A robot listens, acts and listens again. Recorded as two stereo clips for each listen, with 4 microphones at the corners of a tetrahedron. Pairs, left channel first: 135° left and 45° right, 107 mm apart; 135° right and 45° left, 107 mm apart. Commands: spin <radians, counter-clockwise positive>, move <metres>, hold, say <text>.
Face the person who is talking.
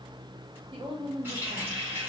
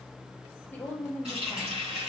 spin -1.05
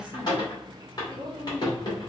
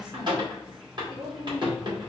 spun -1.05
say Facing the woman speaking.